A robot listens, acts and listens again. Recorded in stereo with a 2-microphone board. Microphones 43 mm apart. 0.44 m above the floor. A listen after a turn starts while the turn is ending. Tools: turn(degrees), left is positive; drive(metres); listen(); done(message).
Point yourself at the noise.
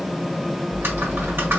turn(degrees=-60)
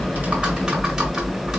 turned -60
turn(degrees=-20)
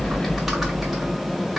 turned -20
turn(degrees=-10)
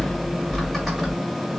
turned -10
done("Found it: typing on a keyboard, straight ahead.")